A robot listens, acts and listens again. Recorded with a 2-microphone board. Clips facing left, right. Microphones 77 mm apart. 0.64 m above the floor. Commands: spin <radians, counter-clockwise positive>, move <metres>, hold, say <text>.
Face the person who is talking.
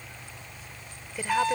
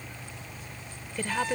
spin 0.52
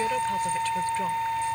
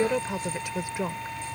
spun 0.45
spin -0.26
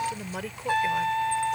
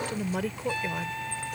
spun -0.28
say Found it: a woman speaking, straight ahead.